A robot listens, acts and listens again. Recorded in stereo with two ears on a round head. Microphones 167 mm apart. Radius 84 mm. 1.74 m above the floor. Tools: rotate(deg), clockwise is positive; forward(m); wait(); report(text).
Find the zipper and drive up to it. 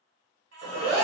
rotate(30)
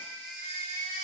wait()
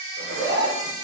rotate(135)
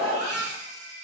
rotate(10)
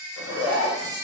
forward(1.0)
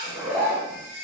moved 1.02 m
rotate(15)
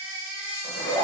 forward(1.0)
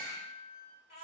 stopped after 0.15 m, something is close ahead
wait()
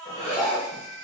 report("I am next to the zipper.")